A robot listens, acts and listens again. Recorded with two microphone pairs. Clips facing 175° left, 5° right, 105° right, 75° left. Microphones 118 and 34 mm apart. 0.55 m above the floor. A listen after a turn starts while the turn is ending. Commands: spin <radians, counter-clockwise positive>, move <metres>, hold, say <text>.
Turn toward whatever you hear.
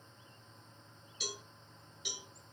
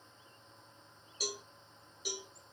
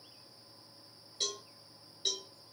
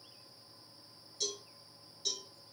spin -0.87
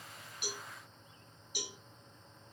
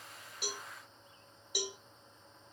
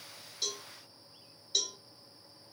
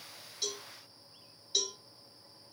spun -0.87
spin -0.17
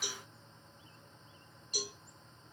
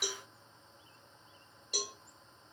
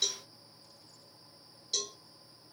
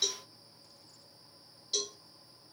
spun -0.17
say Found it: a cowbell, straight ahead.